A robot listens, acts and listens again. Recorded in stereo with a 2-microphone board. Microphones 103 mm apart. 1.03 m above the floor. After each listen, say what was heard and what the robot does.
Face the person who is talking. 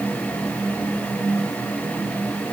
Keep listening.
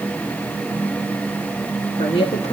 The woman speaking: about 75° left or 105° left. Turn 75° left.
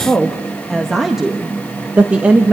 So it is at 15° right. Turn 15° right.
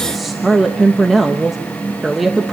Facing the woman speaking.